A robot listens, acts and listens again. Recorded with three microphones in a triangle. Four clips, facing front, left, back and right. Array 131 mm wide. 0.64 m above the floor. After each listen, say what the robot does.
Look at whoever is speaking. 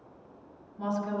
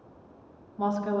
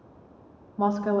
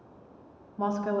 Turn 175° right.
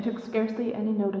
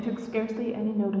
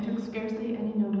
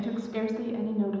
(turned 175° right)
Turn 15° left.
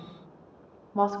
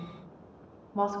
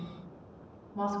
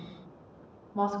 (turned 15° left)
Found it: a woman speaking, straight ahead.